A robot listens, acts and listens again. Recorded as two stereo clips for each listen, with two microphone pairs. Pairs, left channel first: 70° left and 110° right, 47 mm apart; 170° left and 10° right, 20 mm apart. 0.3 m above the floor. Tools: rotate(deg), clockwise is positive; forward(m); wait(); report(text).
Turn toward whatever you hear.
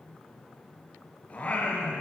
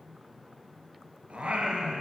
rotate(-15)
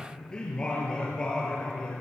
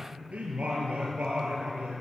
report("Found it: singing, straight ahead, over 4 m away.")